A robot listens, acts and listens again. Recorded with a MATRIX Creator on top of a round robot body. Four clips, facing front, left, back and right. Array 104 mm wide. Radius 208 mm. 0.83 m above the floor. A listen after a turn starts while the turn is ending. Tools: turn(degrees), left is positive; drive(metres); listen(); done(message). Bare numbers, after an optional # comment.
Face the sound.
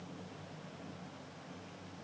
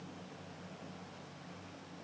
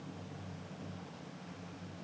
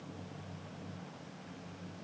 listen()
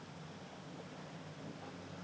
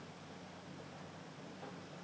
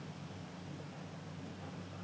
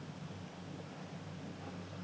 listen()
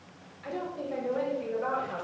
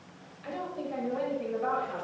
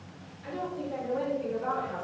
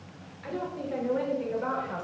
# The woman speaking: 65° right.
turn(-65)
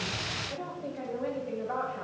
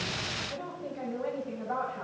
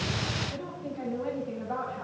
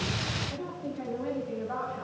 # The woman speaking is now 10° left.
turn(10)
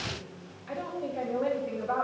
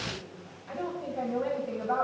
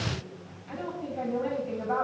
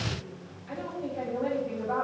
done("Facing the woman speaking, over 4 m away.")